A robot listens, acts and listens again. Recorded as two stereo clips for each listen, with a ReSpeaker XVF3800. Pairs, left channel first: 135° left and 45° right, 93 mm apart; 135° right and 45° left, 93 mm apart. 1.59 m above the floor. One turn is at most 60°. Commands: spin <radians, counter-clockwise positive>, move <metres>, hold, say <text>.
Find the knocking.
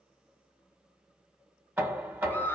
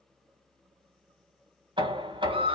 spin 0.44
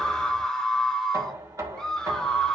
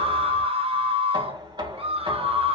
spin 0.17
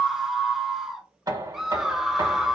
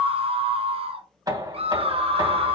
say Facing the knocking.